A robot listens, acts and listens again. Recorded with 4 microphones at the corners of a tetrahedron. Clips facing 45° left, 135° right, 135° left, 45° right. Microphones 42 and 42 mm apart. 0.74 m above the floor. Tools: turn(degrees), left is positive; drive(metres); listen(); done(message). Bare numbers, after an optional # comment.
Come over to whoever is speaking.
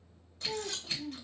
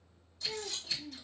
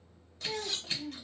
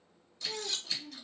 # The child speaking: 130° left.
turn(130)
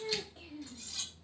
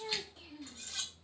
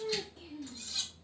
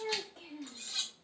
# The child speaking is now 25° right.
turn(-25)
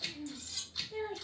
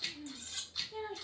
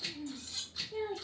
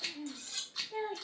drive(1.0)
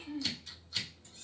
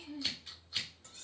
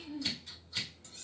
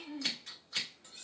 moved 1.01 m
drive(1.0)
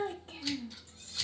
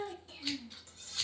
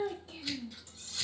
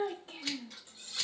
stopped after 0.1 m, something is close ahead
done("I am next to the child speaking.")